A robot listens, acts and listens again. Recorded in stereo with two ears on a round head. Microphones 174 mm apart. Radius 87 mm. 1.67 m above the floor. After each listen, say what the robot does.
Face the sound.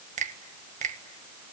Turn 40° right.
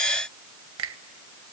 Turn 100° right.
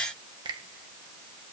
Turn 20° right.
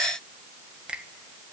Found it: a finger snap, straight ahead.